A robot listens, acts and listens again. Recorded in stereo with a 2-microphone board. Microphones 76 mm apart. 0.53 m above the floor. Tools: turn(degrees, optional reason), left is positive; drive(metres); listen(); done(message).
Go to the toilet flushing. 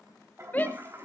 turn(degrees=-35, reason="The toilet flushing: about 35° right or 145° right.")
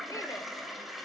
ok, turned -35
drive(metres=1.0)
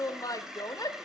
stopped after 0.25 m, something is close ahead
done("Blocked. The toilet flushing is further on, straight ahead.")